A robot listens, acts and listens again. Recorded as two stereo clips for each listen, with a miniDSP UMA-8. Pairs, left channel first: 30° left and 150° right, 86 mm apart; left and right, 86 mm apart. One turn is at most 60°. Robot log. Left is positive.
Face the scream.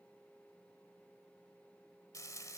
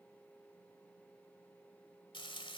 cmd idle
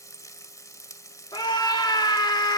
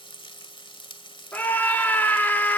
note: The scream: 25° left.
cmd yaw +25
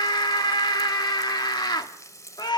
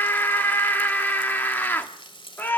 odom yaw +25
note: The scream is now 25° left.
cmd yaw +25
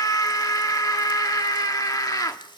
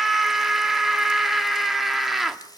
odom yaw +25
end: Found it: a scream, straight ahead, 1 to 2 m away.